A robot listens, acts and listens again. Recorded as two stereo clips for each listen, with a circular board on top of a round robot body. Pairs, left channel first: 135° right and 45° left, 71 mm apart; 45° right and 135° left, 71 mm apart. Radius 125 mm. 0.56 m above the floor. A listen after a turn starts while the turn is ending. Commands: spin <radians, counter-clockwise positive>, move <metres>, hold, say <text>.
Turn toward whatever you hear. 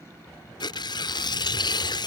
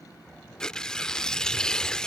spin -2.18
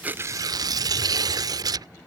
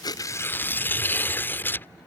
spin 0.26
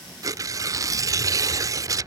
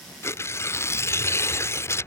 say Found it: tearing paper, straight ahead.